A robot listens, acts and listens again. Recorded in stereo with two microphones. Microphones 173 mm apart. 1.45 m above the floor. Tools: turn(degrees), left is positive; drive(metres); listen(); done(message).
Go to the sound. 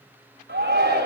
turn(degrees=-90)
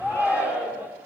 turn(degrees=-10)
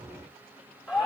drive(metres=1.0)
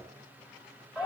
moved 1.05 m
drive(metres=1.0)
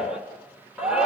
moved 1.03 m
drive(metres=1.0)
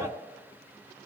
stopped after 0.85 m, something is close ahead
listen()
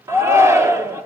turn(degrees=-15)
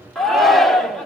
done("I am next to the shout.")